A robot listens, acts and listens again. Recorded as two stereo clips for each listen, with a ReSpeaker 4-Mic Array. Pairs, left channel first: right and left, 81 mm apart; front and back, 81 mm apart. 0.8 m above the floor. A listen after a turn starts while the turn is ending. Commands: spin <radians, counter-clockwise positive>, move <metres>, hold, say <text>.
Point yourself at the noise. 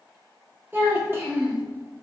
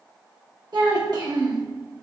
spin 2.62
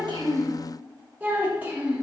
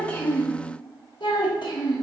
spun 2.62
spin 0.35
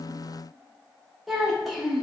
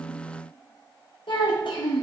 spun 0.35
say Found it: a child speaking, straight ahead.